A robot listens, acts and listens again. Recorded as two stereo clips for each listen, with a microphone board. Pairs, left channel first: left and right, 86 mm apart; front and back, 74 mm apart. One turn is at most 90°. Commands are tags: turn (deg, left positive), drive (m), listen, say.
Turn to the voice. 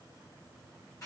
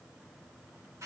<listen/>
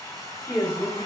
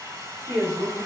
<turn deg="-90"/>
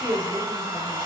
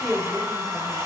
<turn deg="-80"/>
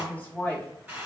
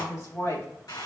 <turn deg="25"/>
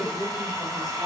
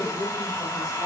<say>Facing the woman speaking.</say>